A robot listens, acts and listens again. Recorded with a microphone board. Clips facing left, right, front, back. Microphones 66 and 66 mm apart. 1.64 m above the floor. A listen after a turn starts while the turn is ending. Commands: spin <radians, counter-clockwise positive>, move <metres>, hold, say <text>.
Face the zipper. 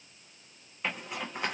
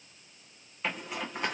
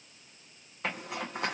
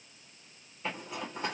say Found it: a zipper, straight ahead, 1 to 2 m away.